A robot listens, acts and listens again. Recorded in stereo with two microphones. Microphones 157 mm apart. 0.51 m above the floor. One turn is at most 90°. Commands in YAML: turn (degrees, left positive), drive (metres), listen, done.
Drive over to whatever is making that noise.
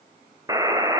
turn: -20
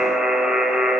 drive: 1.0
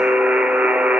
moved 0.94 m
turn: -10
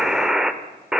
drive: 1.0
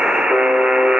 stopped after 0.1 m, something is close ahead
done: "Arrived at the buzzer, straight ahead."